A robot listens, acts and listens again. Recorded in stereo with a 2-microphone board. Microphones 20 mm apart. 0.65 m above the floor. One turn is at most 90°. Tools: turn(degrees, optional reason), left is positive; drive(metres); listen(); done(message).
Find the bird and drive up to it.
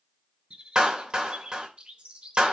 turn(degrees=-90)
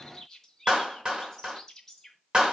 turn(degrees=10, reason="So it is at 10° left.")
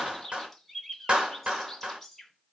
drive(metres=1.0)
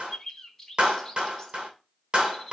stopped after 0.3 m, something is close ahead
done("Something is in my way. I am facing the bird but have not reached it.")